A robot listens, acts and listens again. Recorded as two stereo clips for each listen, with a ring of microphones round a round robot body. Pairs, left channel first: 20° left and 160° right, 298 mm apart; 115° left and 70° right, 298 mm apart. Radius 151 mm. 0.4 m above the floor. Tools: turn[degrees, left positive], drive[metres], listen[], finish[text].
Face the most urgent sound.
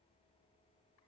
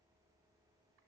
Action: listen[]
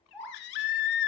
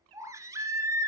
Thought: The baby crying: 15° left.
Action: turn[15]
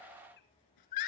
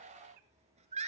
Action: finish[Facing the baby crying, 1 to 2 m away.]